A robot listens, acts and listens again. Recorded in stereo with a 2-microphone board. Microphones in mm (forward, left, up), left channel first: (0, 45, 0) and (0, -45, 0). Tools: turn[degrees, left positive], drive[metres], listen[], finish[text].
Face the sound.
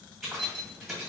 Action: turn[30]
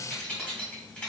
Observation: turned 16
Thought: So it is at 165° left.
Action: turn[165]
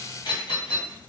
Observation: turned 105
Thought: The keys jangling is now 60° left.
Action: turn[60]
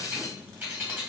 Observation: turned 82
Thought: The keys jangling is now 20° right.
Action: turn[-20]
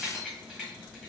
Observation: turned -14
Thought: The keys jangling is now 10° right.
Action: turn[-10]
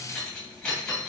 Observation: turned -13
Action: finish[Facing the keys jangling.]